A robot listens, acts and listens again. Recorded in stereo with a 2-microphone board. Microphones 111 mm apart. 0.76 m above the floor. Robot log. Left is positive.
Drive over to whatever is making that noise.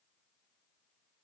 cmd idle
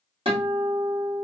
note: The guitar: about 55° right or 125° right.
cmd yaw -55
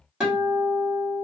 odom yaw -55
cmd fwd 1.0
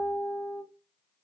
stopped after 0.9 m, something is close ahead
end: Arrived at the guitar, straight ahead.